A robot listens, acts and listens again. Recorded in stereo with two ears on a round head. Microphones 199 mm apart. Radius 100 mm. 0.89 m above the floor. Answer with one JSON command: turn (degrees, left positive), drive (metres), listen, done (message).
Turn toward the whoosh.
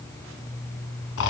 {"listen": true}
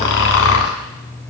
{"listen": true}
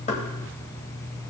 {"done": "I can't make out a whoosh to turn to."}